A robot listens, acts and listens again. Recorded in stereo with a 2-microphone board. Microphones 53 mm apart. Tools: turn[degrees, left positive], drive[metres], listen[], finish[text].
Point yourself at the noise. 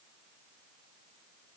Action: listen[]
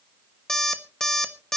Action: turn[30]
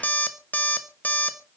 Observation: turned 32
Thought: So it is at 140° left.
Action: turn[140]
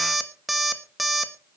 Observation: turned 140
Action: finish[Found it: an alarm clock, straight ahead, 1 to 2 m away.]